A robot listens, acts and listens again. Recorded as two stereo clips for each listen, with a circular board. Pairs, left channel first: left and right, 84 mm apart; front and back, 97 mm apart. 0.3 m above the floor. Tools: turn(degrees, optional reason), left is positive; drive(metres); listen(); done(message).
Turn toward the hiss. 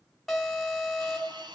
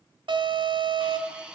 turn(degrees=-100, reason="The hiss: 100° right.")
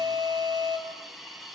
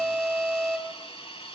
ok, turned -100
done("Facing the hiss.")